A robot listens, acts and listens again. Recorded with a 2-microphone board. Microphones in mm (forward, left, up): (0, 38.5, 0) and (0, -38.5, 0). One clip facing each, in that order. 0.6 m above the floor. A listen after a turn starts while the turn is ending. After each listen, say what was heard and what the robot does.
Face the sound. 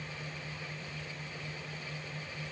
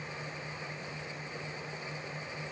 Keep listening.
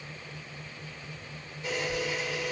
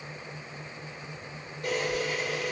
The camera shutter: about 50° right or 130° right. Turn 50° right.
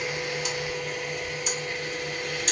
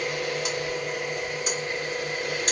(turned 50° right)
So it is at 60° right. Turn 60° right.
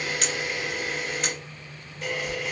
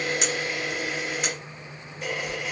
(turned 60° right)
Facing the camera shutter, 1 to 2 m away.